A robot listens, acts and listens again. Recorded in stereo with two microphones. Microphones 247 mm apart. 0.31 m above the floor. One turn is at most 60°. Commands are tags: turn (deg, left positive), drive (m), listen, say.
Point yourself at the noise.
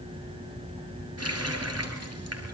<turn deg="-60"/>
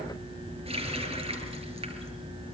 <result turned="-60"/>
<turn deg="-25"/>
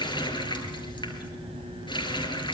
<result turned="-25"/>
<turn deg="20"/>
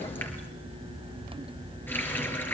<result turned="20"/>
<turn deg="10"/>
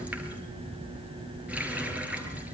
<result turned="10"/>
<say>Facing the running tap, over 4 m away.</say>